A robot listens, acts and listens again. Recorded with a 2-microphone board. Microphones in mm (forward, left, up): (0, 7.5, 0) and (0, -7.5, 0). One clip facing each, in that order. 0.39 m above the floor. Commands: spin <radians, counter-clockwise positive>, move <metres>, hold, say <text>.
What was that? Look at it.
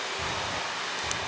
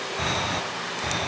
spin -0.87
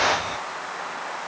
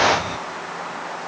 say Found it: breathing, straight ahead.